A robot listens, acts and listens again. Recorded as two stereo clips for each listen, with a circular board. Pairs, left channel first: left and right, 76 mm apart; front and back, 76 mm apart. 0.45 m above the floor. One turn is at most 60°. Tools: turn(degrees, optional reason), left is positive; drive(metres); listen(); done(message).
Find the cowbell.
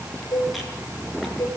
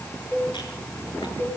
turn(degrees=60, reason="The cowbell: 60° left.")
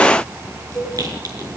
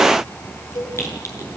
turn(degrees=10, reason="The cowbell is now 10° left.")
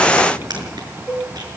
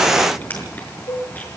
done("Found it: a cowbell, straight ahead.")